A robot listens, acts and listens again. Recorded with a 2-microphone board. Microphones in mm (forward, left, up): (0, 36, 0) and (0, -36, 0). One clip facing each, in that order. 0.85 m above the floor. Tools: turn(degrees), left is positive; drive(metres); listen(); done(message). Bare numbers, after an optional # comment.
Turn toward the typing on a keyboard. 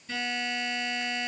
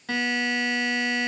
listen()
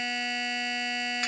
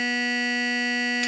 listen()
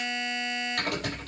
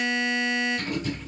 turn(90)
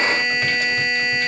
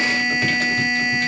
listen()
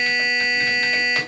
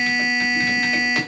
listen()
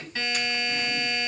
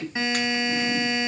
done("Found it: typing on a keyboard, straight ahead.")